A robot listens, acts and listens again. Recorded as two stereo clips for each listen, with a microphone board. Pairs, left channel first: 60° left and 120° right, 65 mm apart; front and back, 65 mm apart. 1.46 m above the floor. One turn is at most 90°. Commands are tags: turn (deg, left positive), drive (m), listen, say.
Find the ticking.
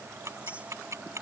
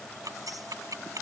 <turn deg="-90"/>
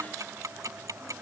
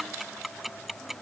<turn deg="-90"/>
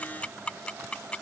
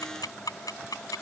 <turn deg="-10"/>
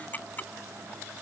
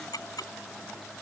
<say>Found it: ticking, straight ahead.</say>